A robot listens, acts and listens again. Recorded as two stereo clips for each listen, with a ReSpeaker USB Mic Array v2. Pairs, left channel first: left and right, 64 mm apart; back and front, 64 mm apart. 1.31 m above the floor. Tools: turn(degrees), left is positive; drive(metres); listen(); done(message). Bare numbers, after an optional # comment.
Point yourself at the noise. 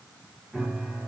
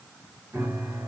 # The piano: 20° right.
turn(-20)
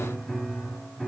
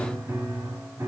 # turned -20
done("Found it: a piano, straight ahead.")